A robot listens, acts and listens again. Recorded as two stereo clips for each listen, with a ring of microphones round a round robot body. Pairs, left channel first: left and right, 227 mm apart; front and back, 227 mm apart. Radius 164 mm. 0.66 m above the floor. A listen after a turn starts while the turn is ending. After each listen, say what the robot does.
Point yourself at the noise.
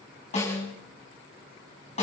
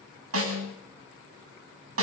Turn 160° left.
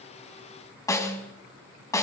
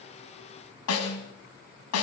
Turn 15° left.
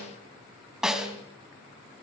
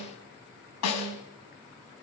Found it: a snare drum, straight ahead.